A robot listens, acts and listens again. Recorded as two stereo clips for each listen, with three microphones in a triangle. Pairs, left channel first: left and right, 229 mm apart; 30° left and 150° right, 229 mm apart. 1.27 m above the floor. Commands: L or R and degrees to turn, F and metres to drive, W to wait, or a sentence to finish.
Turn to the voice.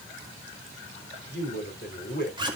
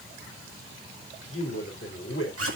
L55
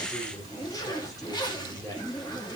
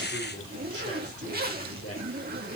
L15
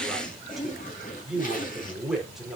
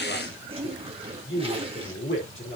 Facing the man speaking.